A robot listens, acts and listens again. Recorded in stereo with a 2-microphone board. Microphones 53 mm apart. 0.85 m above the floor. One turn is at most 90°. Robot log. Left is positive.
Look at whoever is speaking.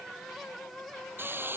cmd idle
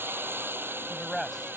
cmd yaw +30
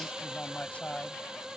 note: So it is at 155° left.
cmd yaw +90
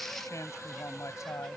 note: The man speaking is now 80° left.
cmd yaw +80
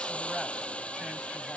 cmd idle
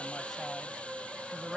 end: Found it: a man speaking, straight ahead.